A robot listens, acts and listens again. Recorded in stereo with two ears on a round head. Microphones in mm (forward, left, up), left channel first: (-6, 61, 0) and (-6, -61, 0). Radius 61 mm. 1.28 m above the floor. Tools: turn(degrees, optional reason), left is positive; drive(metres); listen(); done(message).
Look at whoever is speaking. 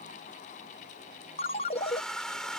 listen()
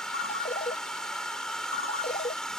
listen()
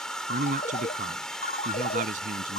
turn(degrees=-65, reason="The man speaking: about 65° right or 115° right.")
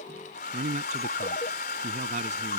turn(degrees=-55, reason="So it is at 55° right.")
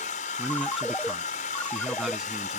done("Facing the man speaking.")